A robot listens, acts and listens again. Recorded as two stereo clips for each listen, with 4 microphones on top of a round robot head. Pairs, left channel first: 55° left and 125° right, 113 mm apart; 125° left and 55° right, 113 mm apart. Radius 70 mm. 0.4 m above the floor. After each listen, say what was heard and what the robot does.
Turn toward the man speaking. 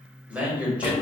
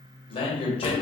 The man speaking: 155° left. Turn 155° left.
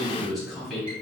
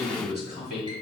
The man speaking is now 40° right. Turn 40° right.
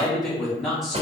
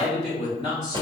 The man speaking is now 35° right. Turn 35° right.
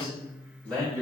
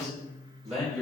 The man speaking is now 25° right. Turn 25° right.
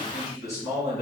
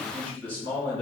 The man speaking is now 10° right. Turn 10° right.
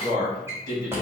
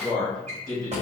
Found it: a man speaking, straight ahead, 2 to 4 m away.